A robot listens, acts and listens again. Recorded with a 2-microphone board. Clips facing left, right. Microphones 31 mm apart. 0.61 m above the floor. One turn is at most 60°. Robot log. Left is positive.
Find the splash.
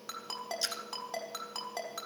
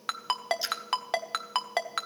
cmd yaw -30
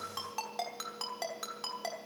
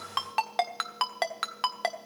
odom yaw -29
cmd idle
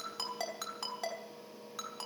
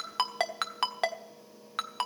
end: I heard a splash, but can't make it out now. It was about 20° left or 145° right.